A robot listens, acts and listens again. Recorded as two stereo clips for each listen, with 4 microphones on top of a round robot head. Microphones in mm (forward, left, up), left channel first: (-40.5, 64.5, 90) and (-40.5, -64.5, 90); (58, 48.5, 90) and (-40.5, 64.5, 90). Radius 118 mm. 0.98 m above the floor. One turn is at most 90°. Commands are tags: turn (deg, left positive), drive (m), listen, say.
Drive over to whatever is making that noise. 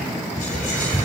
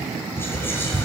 <turn deg="60"/>
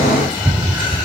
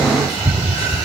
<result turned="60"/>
<drive m="1.0"/>
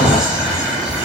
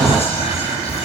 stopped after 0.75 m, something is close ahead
<say>Blocked. The whispering is further on, straight ahead.</say>